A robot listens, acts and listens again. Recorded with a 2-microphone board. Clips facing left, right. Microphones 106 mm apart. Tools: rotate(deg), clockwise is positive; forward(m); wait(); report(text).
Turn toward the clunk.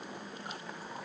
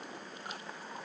wait()
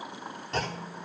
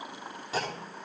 rotate(30)
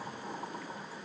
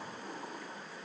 wait()
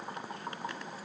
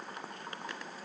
report("I heard a clunk, but can't make it out now. It was about 25° left or 145° right.")